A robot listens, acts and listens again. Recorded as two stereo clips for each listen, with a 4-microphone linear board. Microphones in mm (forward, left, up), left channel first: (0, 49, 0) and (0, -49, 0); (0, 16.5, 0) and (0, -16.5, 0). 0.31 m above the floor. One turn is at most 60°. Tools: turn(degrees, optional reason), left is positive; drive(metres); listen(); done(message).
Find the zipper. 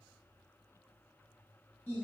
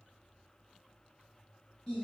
listen()
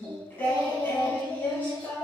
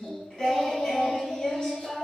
listen()
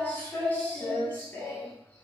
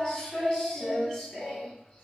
done("I can't make out a zipper to turn to.")